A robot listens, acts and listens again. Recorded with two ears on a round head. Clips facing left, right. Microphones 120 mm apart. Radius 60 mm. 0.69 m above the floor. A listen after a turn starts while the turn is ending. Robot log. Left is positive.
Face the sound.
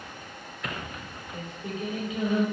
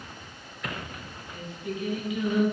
note: The singing: about 30° left or 150° left.
cmd yaw +30
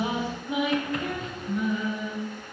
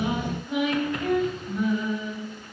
end: Found it: singing, straight ahead, over 4 m away.